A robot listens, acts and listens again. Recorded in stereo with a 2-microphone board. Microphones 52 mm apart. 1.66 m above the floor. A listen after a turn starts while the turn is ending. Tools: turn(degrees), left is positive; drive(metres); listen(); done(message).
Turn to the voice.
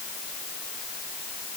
listen()
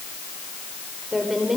turn(degrees=-30)
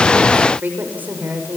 turn(degrees=-145)
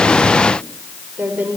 turn(degrees=-35)
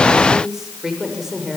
turn(degrees=-10)
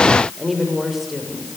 done("Facing the woman speaking, over 4 m away.")